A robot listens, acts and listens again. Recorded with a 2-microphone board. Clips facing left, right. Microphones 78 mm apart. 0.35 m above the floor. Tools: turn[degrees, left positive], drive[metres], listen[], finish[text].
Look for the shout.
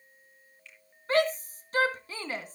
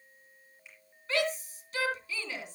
Thought: The shout: about 40° left or 140° left.
Action: turn[40]
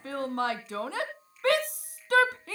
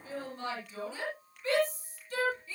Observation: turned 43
Thought: So it is at 95° left.
Action: turn[95]
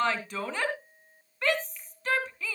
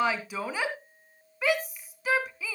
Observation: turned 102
Action: finish[Found it: a shout, straight ahead, 2 to 4 m away.]